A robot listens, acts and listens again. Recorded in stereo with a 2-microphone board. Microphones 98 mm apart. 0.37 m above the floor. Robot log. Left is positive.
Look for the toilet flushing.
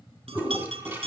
note: The toilet flushing: about 20° right or 160° right.
cmd yaw -20
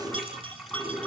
end: Found it: a toilet flushing, straight ahead, 2 to 4 m away.